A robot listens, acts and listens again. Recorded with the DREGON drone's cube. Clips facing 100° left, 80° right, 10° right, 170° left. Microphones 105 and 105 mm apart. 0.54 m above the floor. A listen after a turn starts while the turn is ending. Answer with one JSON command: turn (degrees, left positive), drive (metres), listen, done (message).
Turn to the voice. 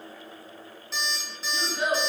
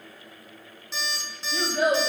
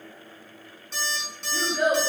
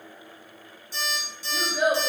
{"turn": -110}
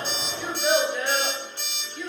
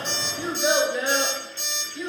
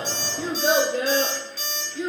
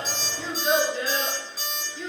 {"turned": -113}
{"turn": -10}
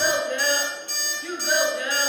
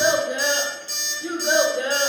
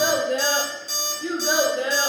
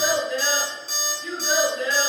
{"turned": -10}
{"turn": -25}
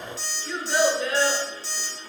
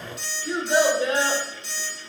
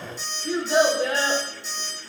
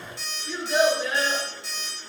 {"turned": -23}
{"turn": -20}
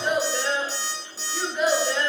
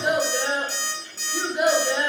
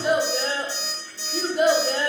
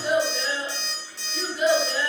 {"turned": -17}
{"done": "Facing the child speaking."}